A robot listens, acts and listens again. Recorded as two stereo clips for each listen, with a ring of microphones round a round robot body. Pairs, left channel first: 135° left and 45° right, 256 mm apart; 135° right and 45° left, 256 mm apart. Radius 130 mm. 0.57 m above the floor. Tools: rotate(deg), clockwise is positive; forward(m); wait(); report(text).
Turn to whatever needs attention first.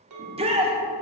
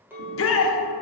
rotate(110)
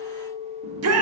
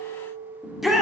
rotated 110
rotate(45)
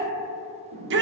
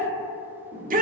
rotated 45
rotate(10)
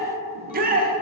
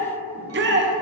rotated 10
report("Found it: a shout, straight ahead, 1 to 2 m away.")